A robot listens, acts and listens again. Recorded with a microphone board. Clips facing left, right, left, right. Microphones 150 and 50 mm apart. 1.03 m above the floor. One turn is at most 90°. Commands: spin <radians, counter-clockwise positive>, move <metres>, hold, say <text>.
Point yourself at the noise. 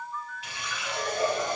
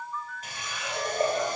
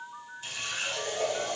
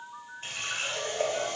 spin -0.79
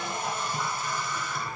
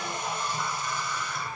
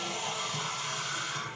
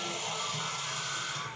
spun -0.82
say Found it: a running tap, straight ahead.